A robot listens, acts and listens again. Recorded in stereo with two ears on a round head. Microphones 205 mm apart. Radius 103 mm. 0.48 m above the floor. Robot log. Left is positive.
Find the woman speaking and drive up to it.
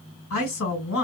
note: The woman speaking: about 65° left or 115° left.
cmd yaw +65
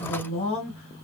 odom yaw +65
note: So it is at 30° left.
cmd yaw +30
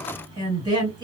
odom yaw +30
note: The woman speaking is now 20° right.
cmd yaw -20
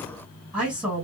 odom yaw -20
cmd fwd 1.0
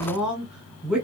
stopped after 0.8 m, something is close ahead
end: I am next to the woman speaking.